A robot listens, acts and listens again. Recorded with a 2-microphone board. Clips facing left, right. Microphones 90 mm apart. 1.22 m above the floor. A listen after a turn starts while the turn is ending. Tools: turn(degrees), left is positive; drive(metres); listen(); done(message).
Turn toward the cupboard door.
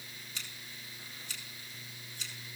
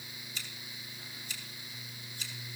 listen()
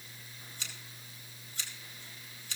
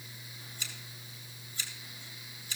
listen()
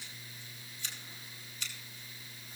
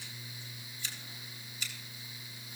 done("I can't make out a cupboard door to turn to.")